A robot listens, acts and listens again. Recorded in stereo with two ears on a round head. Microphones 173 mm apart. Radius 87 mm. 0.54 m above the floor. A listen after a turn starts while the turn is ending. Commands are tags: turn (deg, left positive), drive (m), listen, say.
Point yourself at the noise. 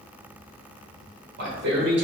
<turn deg="-60"/>
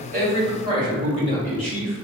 <turn deg="-35"/>
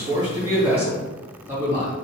<turn deg="-15"/>
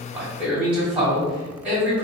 <say>Facing the man speaking, 2 to 4 m away.</say>